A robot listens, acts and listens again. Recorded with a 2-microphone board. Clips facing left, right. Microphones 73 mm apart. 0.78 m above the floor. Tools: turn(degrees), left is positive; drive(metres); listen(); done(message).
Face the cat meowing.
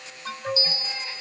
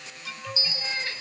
turn(degrees=-75)
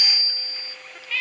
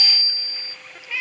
turn(degrees=-15)
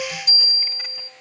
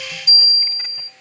listen()
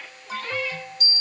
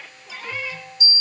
listen()
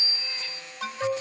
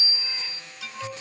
done("Facing where the cat meowing came from. I can't hear it now.")